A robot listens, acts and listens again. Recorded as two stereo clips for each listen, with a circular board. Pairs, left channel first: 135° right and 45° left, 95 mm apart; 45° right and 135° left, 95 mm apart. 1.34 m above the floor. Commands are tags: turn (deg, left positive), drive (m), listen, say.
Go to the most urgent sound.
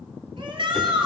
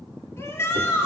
<turn deg="20"/>
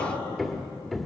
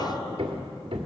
<listen/>
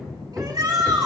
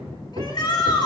<drive m="1.0"/>
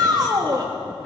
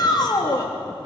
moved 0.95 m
<drive m="1.0"/>
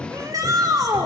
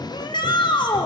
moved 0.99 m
<drive m="1.0"/>
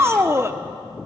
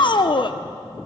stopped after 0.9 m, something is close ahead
<turn deg="-15"/>
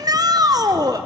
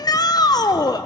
<say>I am next to the shout.</say>